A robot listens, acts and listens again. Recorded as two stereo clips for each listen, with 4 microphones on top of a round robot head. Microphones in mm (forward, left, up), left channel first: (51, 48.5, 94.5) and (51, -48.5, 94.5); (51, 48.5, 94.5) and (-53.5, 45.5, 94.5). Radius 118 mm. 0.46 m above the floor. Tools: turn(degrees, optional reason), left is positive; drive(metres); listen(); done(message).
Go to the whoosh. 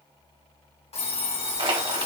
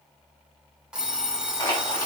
listen()
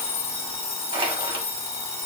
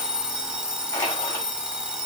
listen()
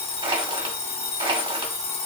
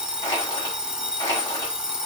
done("I can't make out a whoosh to turn to.")